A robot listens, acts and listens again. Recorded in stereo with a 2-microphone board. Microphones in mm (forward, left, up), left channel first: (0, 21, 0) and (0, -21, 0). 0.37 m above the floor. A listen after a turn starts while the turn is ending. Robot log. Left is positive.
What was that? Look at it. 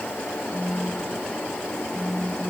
cmd yaw +30
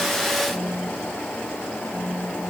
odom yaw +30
note: So it is at 20° right.
cmd yaw -20
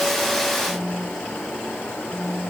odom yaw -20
end: Facing the phone buzzing.